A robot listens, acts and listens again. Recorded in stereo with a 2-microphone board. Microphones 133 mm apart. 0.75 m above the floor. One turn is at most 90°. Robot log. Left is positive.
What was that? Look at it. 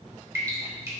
note: The dripping: about 20° right or 160° right.
cmd yaw -20
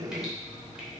cmd idle
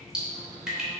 end: Facing the dripping.